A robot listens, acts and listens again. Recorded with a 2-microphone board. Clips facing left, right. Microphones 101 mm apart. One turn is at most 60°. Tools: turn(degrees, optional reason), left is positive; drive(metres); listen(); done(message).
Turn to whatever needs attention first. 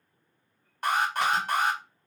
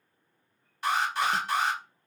turn(degrees=50, reason="The alarm: about 50° left or 130° left.")
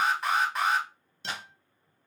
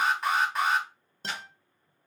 done("Facing the alarm.")